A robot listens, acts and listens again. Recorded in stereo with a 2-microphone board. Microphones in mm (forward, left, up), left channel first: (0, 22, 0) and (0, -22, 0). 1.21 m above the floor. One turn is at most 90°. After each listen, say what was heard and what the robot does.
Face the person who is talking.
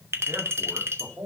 The man speaking: about 70° right or 110° right. Turn 70° right.
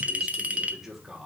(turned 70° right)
So it is at 10° right. Turn 10° right.
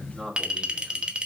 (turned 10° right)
Found it: a man speaking, straight ahead, 2 to 4 m away.